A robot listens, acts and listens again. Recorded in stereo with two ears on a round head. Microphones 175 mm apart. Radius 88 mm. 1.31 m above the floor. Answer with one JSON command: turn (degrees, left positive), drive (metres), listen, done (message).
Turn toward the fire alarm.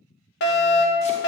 {"turn": 60}
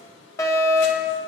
{"turn": 20}
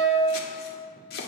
{"done": "Facing the fire alarm."}